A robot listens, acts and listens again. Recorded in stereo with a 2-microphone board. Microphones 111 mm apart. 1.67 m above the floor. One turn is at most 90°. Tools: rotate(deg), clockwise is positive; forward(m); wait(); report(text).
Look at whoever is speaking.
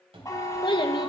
rotate(-50)
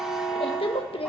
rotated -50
rotate(-75)
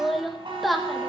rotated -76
report("Found it: a child speaking, straight ahead, 1 to 2 m away.")